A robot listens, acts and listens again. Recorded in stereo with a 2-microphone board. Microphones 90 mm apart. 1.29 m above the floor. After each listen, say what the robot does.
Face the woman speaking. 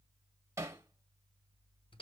Keep listening.
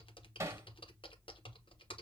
Keep listening.
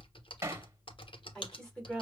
Turn 30° left.
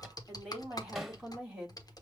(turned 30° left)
Turn 15° right.
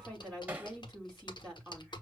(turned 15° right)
Facing the woman speaking.